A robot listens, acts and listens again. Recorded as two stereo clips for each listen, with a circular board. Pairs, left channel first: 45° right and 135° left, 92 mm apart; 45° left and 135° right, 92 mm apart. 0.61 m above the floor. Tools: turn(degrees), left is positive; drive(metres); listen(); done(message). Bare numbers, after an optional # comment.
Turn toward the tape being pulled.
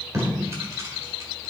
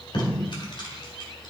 # The tape being pulled: 75° left.
turn(75)
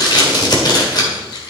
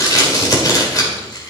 done("Facing the tape being pulled, 2 to 4 m away.")